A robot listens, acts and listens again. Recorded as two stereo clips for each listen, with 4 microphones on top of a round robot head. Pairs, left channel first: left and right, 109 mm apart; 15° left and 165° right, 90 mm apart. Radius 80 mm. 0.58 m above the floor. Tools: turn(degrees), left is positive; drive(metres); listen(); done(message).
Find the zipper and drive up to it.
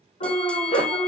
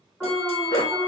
turn(degrees=65)
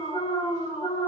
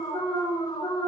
listen()
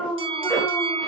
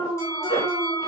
drive(metres=1.0)
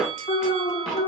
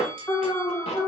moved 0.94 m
drive(metres=1.0)
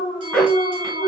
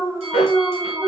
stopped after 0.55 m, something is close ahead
done("I am next to the zipper.")